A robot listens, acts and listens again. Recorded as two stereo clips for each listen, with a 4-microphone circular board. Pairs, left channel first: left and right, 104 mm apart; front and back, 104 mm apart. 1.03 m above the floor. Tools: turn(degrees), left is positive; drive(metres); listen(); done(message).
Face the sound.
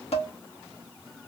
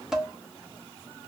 turn(degrees=95)
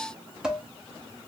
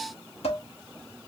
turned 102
done("Facing the dishes clattering, 1 to 2 m away.")